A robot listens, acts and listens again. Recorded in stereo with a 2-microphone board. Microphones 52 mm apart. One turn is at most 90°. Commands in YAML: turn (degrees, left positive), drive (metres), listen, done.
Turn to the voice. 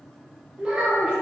turn: -30
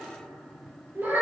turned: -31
turn: -90
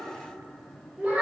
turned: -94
turn: -25
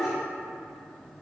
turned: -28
listen: true
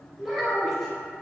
done: "Facing the child speaking."